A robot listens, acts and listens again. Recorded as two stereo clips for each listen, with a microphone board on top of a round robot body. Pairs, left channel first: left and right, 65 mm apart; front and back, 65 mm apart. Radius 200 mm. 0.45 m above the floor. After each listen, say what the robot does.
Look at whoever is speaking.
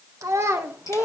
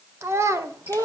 Turn 145° right.
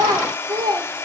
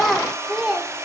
Turn 100° right.
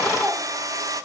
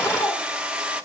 Keep listening.
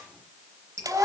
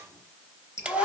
Turn 25° right.
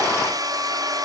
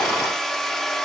Keep listening.
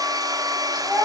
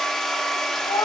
Facing the child speaking, 2 to 4 m away.